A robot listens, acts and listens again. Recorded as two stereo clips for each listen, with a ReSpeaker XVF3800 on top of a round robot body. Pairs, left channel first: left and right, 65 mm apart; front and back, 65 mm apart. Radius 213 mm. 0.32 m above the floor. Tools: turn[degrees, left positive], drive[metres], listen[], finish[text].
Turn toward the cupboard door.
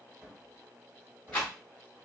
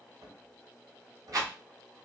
Thought: The cupboard door: 160° right.
Action: turn[-160]
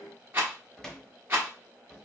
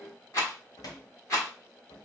Action: finish[Facing the cupboard door, 1 to 2 m away.]